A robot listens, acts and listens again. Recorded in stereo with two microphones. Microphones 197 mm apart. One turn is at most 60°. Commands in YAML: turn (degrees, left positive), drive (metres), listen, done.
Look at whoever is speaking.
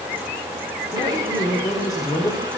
turn: 20
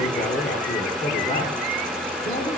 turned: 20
turn: 60
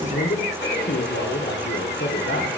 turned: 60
turn: 60
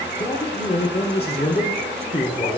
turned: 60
turn: 30
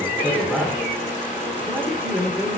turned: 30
done: "Facing the man speaking."